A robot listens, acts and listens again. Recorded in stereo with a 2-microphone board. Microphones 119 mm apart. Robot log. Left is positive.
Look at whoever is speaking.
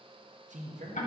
cmd yaw -90
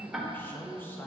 note: So it is at 15° left.
cmd yaw +15
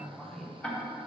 end: Found it: a man speaking, straight ahead, 1 to 2 m away.